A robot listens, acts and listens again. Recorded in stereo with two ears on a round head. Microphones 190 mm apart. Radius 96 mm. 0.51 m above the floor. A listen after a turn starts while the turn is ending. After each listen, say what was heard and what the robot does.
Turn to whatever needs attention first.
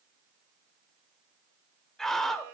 Turn 30° left.
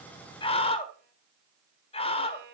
So it is at 145° left. Turn 145° left.
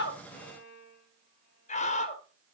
The scream is now 40° left. Turn 40° left.
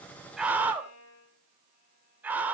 The scream is now 10° right. Turn 10° right.
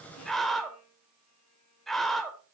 Facing the scream.